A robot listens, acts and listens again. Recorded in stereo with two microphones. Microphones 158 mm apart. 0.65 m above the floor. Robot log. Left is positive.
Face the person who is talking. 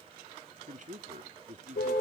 note: The man speaking: about 50° right or 130° right.
cmd yaw -50
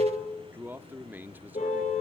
note: So it is at 15° right.
cmd yaw -15
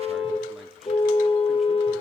cmd idle
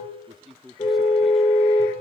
end: Found it: a man speaking, straight ahead.